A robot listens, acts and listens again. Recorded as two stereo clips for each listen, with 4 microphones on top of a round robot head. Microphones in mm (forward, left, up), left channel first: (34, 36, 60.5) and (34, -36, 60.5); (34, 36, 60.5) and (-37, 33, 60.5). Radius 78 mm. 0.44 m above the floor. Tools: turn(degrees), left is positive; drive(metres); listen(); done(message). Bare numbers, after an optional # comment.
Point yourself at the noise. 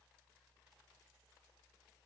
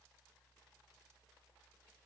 listen()
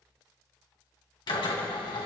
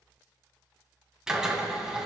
# The drill: 105° left.
turn(105)
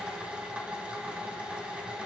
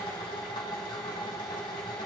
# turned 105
# The drill is now 15° right.
turn(-15)
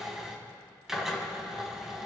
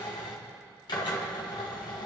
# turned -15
done("Facing the drill, 2 to 4 m away.")